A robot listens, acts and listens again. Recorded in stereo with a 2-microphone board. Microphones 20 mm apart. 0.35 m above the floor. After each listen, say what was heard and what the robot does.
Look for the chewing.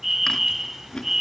The chewing: about 30° left or 150° left. Turn 30° left.
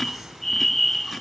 Keep listening.
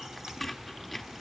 Found it: chewing, straight ahead.